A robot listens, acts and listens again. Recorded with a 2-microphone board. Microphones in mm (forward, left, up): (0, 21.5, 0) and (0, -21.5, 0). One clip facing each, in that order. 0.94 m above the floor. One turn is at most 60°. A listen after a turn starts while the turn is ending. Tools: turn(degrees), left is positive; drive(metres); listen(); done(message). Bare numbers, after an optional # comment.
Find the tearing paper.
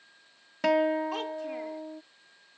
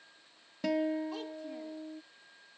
listen()
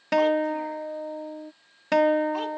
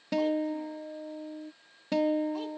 listen()
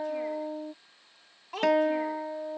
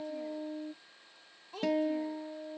done("I can't make out tearing paper to turn to.")